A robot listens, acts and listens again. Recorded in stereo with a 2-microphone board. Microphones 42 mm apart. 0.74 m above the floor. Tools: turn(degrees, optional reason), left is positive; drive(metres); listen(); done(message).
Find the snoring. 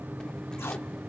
listen()
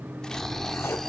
turn(degrees=30)
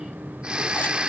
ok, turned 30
turn(degrees=-25, reason="So it is at 25° right.")
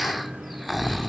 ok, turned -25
done("Found it: snoring, straight ahead, under 1 m away.")